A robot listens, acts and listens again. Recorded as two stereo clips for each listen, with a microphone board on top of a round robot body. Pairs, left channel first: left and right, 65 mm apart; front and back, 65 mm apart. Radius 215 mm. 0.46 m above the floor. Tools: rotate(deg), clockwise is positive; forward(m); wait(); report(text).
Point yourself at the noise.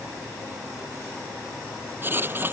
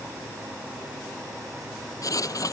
rotate(30)
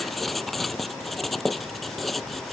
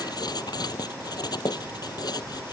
report("Found it: writing, straight ahead.")